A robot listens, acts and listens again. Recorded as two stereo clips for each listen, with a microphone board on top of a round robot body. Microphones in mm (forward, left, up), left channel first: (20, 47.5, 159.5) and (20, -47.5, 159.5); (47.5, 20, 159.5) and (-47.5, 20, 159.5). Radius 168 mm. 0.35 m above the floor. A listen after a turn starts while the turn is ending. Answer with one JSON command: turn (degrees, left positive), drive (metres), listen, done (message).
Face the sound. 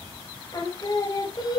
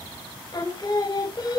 {"turn": 45}
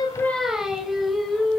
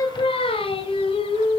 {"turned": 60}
{"done": "Found it: singing, straight ahead, 2 to 4 m away."}